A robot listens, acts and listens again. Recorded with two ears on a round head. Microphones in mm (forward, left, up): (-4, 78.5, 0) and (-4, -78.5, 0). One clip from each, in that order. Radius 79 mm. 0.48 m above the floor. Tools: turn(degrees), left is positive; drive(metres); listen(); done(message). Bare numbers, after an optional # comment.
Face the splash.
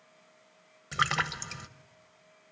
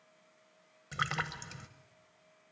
# The splash: about 15° left or 165° left.
turn(15)
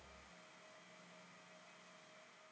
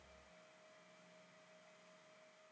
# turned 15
listen()
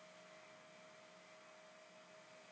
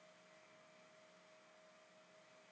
done("I heard a splash, but can't make it out now. It was about straight ahead or 150° left.")